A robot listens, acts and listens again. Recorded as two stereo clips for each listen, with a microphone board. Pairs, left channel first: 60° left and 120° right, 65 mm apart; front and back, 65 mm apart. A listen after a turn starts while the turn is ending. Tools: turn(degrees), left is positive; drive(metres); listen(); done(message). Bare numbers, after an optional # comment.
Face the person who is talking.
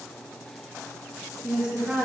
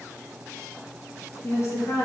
# The woman speaking: 45° right.
turn(-45)
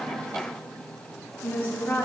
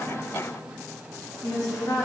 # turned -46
done("Found it: a woman speaking, straight ahead, 2 to 4 m away.")